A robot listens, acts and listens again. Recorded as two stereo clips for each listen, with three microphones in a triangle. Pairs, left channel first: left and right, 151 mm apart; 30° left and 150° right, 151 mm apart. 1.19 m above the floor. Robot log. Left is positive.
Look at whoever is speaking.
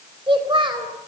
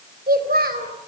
note: The child speaking: 145° right.
cmd yaw -145
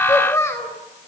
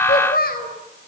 note: The child speaking is now 20° left.
cmd yaw +20
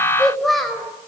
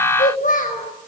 end: Found it: a child speaking, straight ahead, over 4 m away.